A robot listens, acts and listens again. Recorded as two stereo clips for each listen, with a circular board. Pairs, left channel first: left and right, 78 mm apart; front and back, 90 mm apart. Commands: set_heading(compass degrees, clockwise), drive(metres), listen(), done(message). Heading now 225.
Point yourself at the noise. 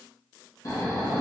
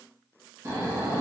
set_heading(105)
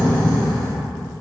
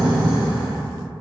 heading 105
set_heading(90)
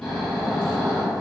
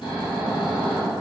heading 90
done("Facing the snoring.")